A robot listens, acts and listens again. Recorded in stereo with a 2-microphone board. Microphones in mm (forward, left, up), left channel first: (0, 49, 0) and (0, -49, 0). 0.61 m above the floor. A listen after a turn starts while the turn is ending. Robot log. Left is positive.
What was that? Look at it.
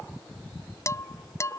note: The dishes clattering: about 35° left or 145° left.
cmd yaw +35
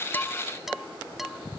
end: Found it: dishes clattering, straight ahead.